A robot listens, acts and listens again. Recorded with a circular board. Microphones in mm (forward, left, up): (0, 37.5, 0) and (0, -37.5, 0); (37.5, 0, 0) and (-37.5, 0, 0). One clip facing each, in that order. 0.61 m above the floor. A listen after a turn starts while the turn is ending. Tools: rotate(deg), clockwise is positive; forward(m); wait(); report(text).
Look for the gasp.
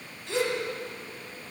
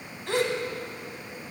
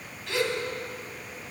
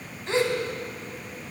rotate(125)
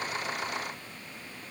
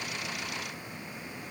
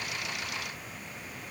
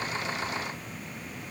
report("Facing where the gasp came from. I can't hear it now.")